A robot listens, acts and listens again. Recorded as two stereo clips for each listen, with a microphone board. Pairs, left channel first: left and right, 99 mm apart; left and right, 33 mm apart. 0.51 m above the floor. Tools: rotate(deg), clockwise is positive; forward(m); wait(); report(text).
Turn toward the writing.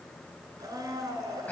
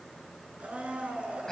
wait()
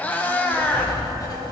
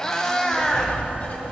rotate(-40)
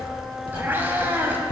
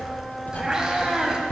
rotate(-90)
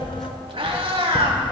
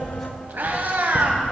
report("Facing the writing.")